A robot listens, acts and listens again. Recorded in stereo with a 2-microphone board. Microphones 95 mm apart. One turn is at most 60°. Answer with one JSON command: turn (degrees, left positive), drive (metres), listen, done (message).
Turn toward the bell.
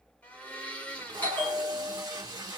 {"turn": 20}
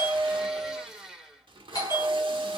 {"turn": 60}
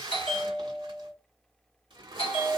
{"turn": 60}
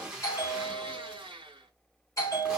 {"turn": 40}
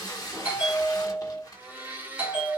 {"turn": -15}
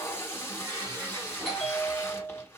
{"done": "Found it: a bell, straight ahead."}